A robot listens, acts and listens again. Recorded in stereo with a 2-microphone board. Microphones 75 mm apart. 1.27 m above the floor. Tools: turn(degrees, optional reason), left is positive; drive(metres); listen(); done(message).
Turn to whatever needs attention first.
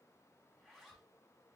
listen()
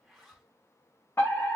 turn(degrees=30, reason="The fire alarm: about 30° left or 150° left.")
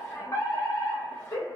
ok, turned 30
turn(degrees=110, reason="So it is at 110° left.")
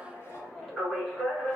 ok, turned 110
done("Facing the fire alarm.")